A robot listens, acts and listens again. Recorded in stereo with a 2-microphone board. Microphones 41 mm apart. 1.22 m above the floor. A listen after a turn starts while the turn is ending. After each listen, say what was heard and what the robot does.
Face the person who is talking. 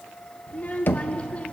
The child speaking: about 35° left or 145° left. Turn 35° left.
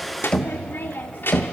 So it is at 110° left. Turn 110° left.
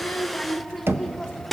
Found it: a child speaking, straight ahead.